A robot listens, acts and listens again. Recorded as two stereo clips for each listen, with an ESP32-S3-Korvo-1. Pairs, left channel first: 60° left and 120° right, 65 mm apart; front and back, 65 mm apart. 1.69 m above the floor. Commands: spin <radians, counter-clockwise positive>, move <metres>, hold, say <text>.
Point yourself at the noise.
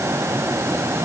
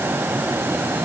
hold
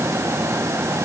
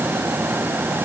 hold
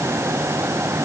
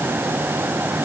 say I can't make out anything to turn to.